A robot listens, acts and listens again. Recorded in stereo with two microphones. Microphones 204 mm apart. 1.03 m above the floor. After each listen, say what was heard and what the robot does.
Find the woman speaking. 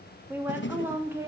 Turn 30° right.
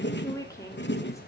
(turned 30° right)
So it is at 15° left. Turn 15° left.
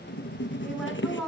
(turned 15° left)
Found it: a woman speaking, straight ahead, over 4 m away.